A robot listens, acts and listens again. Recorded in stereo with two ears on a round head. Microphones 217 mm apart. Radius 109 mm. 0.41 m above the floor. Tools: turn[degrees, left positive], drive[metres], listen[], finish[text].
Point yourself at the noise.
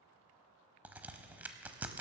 Action: turn[-30]
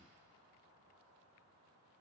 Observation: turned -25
Action: listen[]
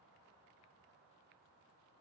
Action: finish[I heard a crack, but can't make it out now. It was about 20° left or 150° right.]